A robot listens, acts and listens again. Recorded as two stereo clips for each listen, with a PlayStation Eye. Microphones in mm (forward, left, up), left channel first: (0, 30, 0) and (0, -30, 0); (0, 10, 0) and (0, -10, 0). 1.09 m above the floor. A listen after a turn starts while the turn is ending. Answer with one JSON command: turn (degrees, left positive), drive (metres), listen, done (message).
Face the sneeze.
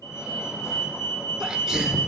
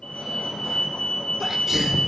{"turn": -30}
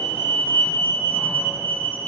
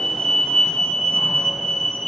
{"listen": true}
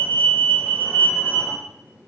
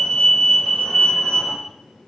{"done": "I heard a sneeze, but can't make it out now. It was about 25° left or 145° right."}